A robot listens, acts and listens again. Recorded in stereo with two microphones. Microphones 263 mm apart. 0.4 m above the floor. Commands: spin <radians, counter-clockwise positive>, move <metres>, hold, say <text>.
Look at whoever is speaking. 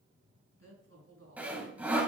spin -1.13
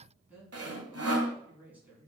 say Facing the woman speaking.